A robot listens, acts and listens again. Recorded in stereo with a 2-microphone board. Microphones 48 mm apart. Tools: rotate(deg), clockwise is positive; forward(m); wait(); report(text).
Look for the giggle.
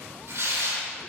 wait()
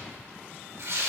wait()
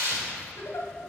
rotate(-70)
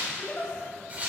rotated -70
rotate(-30)
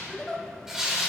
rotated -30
report("Facing the giggle, under 1 m away.")